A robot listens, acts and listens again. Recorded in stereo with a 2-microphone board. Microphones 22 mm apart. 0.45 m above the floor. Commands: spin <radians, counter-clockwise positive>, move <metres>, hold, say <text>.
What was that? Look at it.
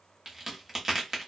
spin -0.44
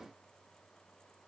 hold
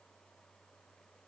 say I heard a crack, but can't make it out now. It was about straight ahead or 130° right.